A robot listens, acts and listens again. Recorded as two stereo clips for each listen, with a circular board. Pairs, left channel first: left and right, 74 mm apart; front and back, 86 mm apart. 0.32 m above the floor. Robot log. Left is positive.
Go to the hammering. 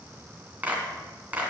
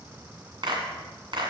cmd idle
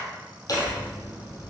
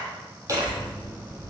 note: The hammering: 130° left.
cmd yaw +130
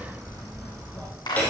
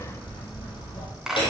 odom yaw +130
note: The hammering is now 20° left.
cmd yaw +20
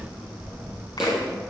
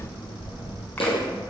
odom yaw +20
cmd fwd 1.0
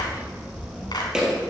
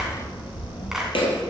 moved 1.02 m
cmd fwd 1.0
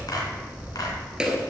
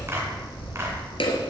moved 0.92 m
note: The hammering is now 10° right.
cmd yaw -10
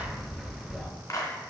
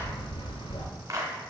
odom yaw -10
cmd fwd 1.0
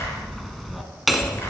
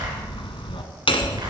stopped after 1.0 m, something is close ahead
end: Arrived at the hammering, straight ahead.